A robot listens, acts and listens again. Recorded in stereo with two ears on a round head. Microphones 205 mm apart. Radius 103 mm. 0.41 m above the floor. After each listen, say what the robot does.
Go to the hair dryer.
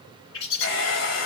Turn 60° left.
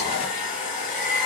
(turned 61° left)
Turn 40° left.
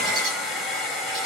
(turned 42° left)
Drive 1.0 m forward.
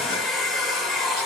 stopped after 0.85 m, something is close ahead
I am next to the hair dryer.